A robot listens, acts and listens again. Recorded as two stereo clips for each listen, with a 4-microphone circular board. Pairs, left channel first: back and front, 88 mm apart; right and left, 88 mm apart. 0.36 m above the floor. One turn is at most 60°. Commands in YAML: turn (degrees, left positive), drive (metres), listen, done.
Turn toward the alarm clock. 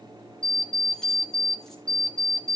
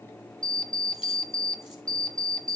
turn: -60
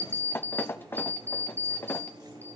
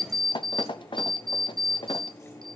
turn: -60
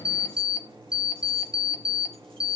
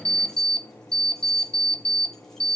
turn: -60
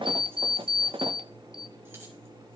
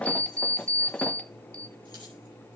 turn: -15
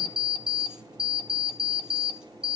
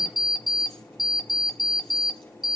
done: "Found it: an alarm clock, straight ahead."